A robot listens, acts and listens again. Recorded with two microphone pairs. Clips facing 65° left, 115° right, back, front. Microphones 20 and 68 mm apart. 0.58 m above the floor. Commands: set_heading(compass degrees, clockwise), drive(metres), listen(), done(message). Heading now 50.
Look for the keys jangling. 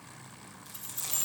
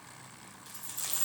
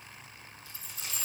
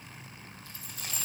set_heading(20)
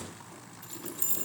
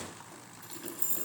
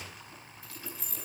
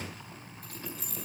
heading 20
set_heading(0)
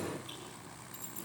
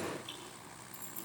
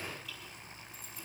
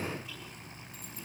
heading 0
listen()
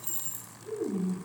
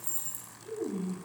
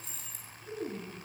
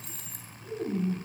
done("Found it: keys jangling, straight ahead, over 4 m away.")